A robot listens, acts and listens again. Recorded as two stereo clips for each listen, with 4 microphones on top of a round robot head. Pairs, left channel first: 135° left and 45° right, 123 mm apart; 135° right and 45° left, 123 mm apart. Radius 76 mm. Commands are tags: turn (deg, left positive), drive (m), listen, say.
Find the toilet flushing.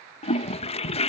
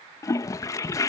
<turn deg="165"/>
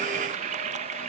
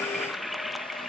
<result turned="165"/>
<turn deg="-45"/>
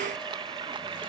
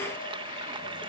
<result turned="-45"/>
<say>Facing the toilet flushing.</say>